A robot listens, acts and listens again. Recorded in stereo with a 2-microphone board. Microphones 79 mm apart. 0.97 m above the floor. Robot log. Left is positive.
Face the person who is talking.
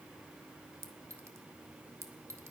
cmd idle
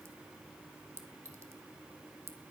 cmd idle
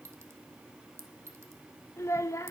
note: The child speaking: about 35° left or 145° left.
cmd yaw +35
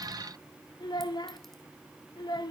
note: So it is at 100° left.
cmd yaw +100
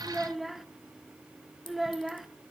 end: Facing the child speaking.